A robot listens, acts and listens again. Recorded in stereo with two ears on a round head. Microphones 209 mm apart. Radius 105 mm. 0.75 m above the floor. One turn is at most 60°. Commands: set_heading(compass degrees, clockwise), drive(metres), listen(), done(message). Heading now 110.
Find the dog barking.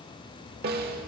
listen()
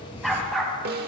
set_heading(80)
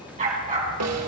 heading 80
set_heading(110)
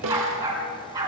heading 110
set_heading(125)
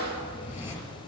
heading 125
listen()
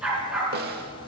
done("Found it: a dog barking, straight ahead.")